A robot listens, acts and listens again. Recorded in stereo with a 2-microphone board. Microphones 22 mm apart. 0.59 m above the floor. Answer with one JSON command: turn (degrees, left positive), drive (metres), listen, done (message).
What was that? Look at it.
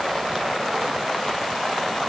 {"listen": true}
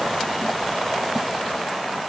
{"listen": true}
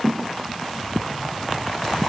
{"done": "I can't make out anything to turn to."}